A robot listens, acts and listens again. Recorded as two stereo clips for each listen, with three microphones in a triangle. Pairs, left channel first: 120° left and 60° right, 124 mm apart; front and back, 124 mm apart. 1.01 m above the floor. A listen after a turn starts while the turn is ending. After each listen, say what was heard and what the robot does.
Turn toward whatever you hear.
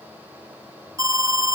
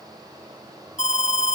Facing the alarm, 1 to 2 m away.